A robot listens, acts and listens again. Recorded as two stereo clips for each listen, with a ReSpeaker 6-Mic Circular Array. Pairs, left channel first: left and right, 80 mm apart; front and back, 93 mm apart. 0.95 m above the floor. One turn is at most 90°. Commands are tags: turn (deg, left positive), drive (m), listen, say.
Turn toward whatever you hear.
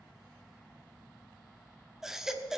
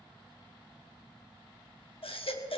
<say>Facing the baby crying.</say>